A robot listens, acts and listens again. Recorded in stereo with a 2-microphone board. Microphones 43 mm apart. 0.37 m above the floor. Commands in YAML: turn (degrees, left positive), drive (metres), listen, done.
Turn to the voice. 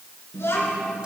turn: 70
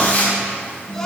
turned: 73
turn: 15
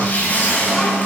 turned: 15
turn: 10
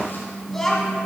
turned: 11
turn: 15
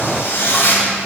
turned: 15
listen: true
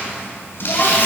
listen: true
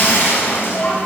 turn: 35
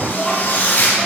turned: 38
done: "Found it: a child speaking, straight ahead."